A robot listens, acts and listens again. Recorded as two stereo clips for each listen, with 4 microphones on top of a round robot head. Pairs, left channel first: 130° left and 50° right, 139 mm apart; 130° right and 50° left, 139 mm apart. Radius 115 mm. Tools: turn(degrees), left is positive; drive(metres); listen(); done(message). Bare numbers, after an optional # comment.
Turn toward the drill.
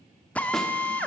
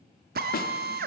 # The drill: 50° left.
turn(50)
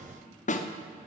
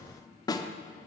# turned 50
listen()
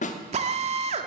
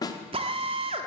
done("Found it: a drill, straight ahead.")